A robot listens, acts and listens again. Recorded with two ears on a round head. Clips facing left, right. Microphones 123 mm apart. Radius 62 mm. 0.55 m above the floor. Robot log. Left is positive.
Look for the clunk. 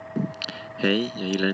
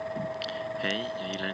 cmd idle
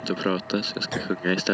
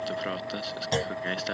note: The clunk: about 25° right or 155° right.
cmd yaw -25
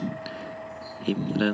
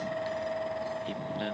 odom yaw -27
cmd idle
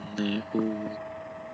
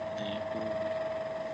end: I heard a clunk, but can't make it out now. It was about 5° left or 130° right.